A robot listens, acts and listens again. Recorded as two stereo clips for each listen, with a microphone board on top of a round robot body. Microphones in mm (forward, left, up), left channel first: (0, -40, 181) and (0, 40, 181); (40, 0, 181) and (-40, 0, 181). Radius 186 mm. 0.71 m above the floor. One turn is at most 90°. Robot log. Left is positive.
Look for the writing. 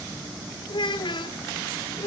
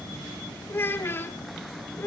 cmd idle
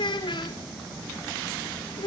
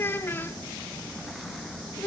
cmd idle
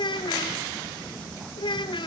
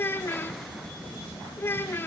end: I can't make out writing to turn to.